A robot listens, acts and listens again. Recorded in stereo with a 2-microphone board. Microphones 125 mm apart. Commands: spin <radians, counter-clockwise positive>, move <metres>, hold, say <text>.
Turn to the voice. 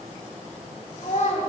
spin 1.57
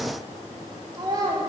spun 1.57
spin -0.61
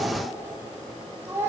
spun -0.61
spin -0.44
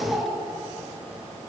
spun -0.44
spin -0.26
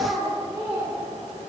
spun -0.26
spin -0.17
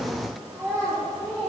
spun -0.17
say Facing the child speaking.